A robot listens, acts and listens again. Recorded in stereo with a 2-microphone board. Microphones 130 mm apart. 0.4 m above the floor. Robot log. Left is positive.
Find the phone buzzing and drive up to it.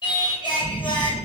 note: The phone buzzing: about 30° right or 150° right.
cmd yaw -30
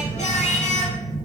note: So it is at 115° right.
cmd yaw -115
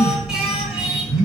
cmd fwd 1.0
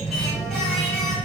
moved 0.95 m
note: The phone buzzing is now 10° right.
cmd yaw -10
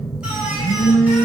cmd fwd 1.0
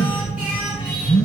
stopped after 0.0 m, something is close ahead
end: I am next to the phone buzzing.